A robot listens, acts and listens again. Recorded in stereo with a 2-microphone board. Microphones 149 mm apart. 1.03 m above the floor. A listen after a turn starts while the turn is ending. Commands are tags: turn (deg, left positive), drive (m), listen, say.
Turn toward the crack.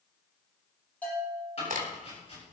<turn deg="-65"/>
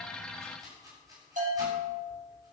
<listen/>
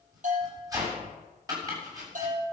<say>I heard a crack, but can't make it out now. It was about straight ahead or 50° right.</say>